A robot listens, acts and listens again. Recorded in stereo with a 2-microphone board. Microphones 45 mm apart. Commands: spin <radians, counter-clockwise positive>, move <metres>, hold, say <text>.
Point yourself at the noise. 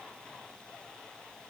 hold
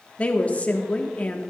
spin 0.52
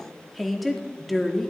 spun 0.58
say Facing the woman speaking.